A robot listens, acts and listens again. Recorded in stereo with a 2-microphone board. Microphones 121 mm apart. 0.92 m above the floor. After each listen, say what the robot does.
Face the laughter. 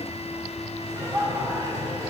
Turn 25° right.
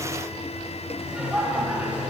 Turn 30° right.
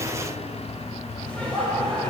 Turn 10° left.
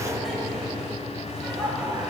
Facing the laughter, over 4 m away.